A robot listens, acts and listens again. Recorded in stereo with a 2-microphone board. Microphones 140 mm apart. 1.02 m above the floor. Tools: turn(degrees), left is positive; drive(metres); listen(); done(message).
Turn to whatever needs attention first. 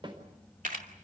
listen()
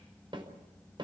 listen()
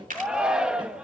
turn(degrees=-30)
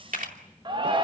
turn(degrees=-145)
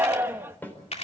turn(degrees=-15)
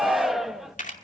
done("Facing the shout.")